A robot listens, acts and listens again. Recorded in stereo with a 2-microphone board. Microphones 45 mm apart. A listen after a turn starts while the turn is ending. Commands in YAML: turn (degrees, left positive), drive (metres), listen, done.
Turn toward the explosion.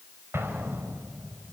turn: -60
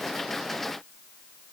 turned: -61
listen: true
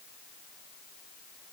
done: "I heard an explosion, but can't make it out now. It was about straight ahead or 60° right."